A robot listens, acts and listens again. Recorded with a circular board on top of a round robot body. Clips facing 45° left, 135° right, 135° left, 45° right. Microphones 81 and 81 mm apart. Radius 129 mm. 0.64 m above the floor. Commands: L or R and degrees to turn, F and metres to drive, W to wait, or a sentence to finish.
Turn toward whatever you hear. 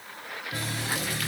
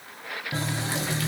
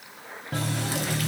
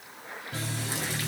L160
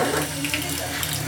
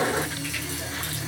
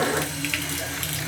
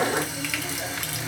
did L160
L35
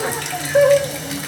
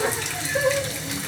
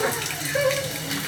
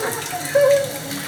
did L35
Found it: a running tap, straight ahead.